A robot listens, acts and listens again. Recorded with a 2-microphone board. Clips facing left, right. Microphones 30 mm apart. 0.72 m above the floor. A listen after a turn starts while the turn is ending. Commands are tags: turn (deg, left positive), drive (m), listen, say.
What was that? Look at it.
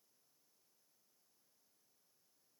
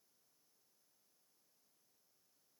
<listen/>
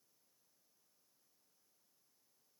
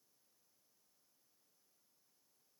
<listen/>
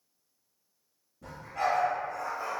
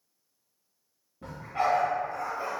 <turn deg="-55"/>
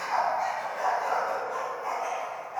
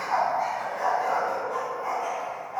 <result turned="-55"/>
<say>Found it: a dog barking, straight ahead.</say>